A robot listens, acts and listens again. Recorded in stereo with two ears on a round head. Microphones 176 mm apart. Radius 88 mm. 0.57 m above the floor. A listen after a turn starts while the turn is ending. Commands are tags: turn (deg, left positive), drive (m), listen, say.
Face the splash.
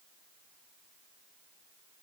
<listen/>
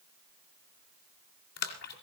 <turn deg="55"/>
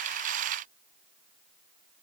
<listen/>
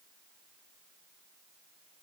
<say>I heard a splash, but can't make it out now. It was about straight ahead or 70° left.</say>